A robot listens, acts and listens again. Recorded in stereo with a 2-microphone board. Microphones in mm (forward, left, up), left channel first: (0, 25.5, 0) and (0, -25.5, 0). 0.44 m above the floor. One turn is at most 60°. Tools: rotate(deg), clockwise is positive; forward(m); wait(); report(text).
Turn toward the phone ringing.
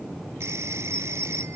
rotate(60)
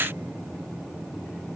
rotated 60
wait()
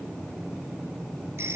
rotate(55)
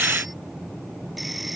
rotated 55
wait()
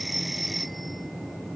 report("Found it: a phone ringing, straight ahead.")